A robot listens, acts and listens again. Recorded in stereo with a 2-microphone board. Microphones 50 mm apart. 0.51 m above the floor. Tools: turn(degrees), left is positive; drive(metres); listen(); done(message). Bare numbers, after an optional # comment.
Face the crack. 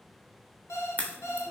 # The crack: about 30° left or 150° left.
turn(30)
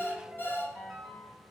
listen()
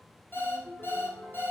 done("I heard a crack, but can't make it out now. It was about straight ahead or 120° left.")